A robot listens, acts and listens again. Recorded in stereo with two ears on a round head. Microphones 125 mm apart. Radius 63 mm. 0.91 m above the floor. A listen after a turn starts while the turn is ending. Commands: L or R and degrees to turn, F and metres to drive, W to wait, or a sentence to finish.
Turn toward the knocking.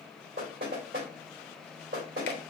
R90
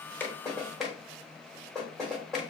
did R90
Found it: knocking, straight ahead.